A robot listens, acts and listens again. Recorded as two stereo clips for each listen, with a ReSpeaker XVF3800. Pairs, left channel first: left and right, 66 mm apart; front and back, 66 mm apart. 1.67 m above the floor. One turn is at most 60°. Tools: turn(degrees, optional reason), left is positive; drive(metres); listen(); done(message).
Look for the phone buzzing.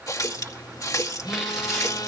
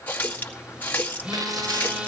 turn(degrees=60, reason="The phone buzzing: 105° left.")
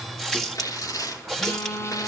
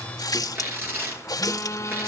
turn(degrees=45, reason="The phone buzzing is now 45° left.")
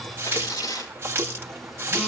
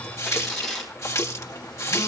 listen()
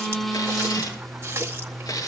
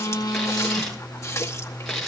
done("Found it: a phone buzzing, straight ahead.")